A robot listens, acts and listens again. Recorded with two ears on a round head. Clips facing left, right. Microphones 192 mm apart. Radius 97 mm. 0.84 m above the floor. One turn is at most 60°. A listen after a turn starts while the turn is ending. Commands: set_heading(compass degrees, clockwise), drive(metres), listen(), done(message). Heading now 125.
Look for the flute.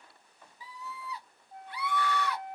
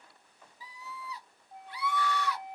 set_heading(155)
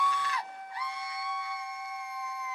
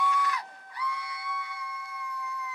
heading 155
set_heading(130)
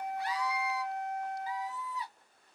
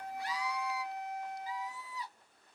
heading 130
done("Facing the flute.")